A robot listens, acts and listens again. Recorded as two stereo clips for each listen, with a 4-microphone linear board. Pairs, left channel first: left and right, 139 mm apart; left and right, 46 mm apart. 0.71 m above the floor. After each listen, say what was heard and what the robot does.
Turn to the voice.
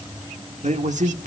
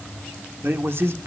The man speaking: about 60° right or 120° right. Turn 60° right.
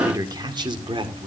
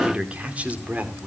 So it is at 40° right. Turn 40° right.
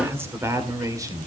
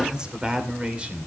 The man speaking is now 25° right. Turn 25° right.
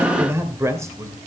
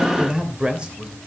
The man speaking is now 25° right. Turn 25° right.
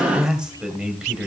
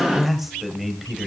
Found it: a man speaking, straight ahead, 2 to 4 m away.